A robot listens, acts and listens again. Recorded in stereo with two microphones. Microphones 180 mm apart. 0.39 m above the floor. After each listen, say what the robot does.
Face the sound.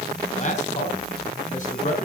Turn 50° left.
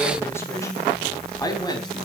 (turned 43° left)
Turn 25° left.
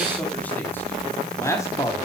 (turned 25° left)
Turn 20° left.
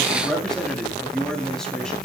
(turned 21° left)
Found it: a man speaking, straight ahead, 2 to 4 m away.